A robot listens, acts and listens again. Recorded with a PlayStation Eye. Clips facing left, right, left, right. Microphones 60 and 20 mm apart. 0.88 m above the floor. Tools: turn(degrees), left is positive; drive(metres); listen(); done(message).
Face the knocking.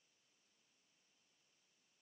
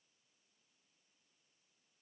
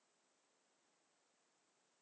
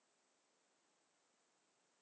listen()
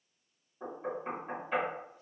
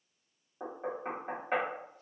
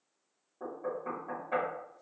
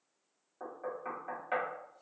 turn(degrees=-55)
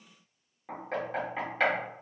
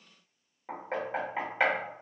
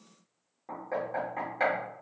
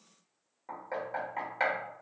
turn(degrees=-20)
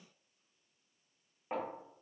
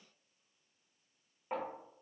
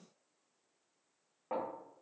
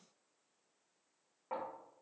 done("Facing the knocking, 1 to 2 m away.")